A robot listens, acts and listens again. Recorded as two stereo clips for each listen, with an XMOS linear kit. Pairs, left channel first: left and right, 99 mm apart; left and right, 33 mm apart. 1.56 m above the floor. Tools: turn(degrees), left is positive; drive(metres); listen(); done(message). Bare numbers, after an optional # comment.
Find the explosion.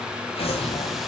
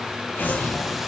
turn(90)
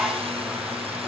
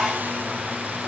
done("Facing where the explosion came from. I can't hear it now.")